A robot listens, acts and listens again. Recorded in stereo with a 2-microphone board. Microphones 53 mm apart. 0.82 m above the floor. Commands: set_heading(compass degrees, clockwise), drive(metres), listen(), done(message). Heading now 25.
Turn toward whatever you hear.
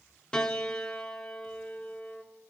set_heading(5)
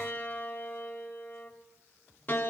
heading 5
set_heading(220)
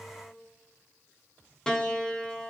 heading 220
set_heading(210)
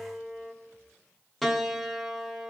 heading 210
done("Found it: a piano, straight ahead.")